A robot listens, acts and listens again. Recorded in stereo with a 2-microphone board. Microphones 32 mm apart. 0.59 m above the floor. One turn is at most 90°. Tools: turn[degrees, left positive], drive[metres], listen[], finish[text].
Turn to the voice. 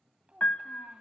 Thought: The child speaking: about 40° right or 140° right.
Action: turn[-40]
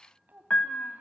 Thought: So it is at 100° right.
Action: turn[-90]
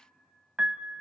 Thought: Nothing new. It was at 10° right.
Action: turn[-10]
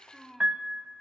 Thought: The child speaking is now 15° left.
Action: turn[15]
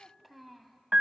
Action: finish[Facing the child speaking, 2 to 4 m away.]